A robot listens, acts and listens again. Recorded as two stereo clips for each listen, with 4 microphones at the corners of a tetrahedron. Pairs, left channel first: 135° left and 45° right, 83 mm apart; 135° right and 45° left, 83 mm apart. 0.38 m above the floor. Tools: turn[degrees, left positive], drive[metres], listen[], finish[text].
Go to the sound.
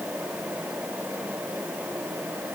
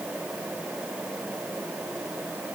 Action: listen[]
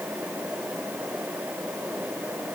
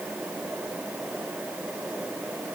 Action: listen[]
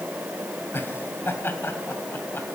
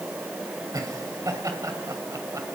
Thought: The laughter: 80° left.
Action: turn[80]
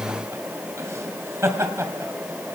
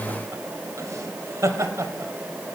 Action: drive[1.0]
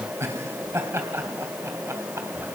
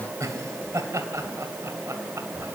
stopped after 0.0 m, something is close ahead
Action: finish[Blocked. The laughter is further on, straight ahead.]